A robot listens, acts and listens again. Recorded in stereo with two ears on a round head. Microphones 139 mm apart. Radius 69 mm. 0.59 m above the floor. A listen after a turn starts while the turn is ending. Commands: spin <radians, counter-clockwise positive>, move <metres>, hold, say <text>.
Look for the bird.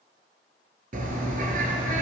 spin -0.96
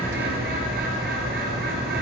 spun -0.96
spin -1.22
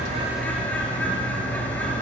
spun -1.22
spin 0.17
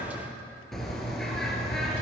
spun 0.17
say Facing the bird, 2 to 4 m away.